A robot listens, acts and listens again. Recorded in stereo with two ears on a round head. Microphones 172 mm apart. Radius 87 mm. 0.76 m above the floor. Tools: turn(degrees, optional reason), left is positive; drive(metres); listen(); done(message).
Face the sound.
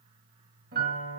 turn(degrees=-55, reason="The piano: about 55° right or 125° right.")
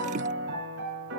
turn(degrees=-65, reason="So it is at 65° right.")
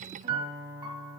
turn(degrees=-25, reason="The piano is now 25° right.")
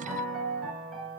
done("Found it: a piano, straight ahead.")